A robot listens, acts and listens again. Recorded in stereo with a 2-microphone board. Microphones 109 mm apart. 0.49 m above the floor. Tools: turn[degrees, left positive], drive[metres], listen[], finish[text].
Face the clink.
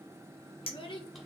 Thought: The clink: about 55° left or 125° left.
Action: turn[55]
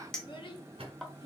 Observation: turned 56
Action: finish[Found it: a clink, straight ahead, under 1 m away.]